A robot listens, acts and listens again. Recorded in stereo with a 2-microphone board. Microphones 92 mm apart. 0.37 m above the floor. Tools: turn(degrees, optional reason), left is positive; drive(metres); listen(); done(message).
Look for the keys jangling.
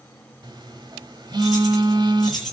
turn(degrees=30)
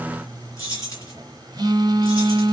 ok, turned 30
turn(degrees=140, reason="So it is at 140° left.")
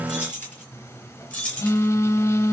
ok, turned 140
turn(degrees=15, reason="The keys jangling is now 15° left.")
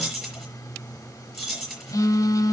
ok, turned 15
done("Facing the keys jangling.")